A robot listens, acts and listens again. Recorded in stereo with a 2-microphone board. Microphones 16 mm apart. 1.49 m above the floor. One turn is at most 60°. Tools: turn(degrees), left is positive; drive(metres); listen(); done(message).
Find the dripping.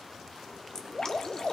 turn(degrees=55)
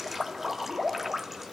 done("Facing the dripping, under 1 m away.")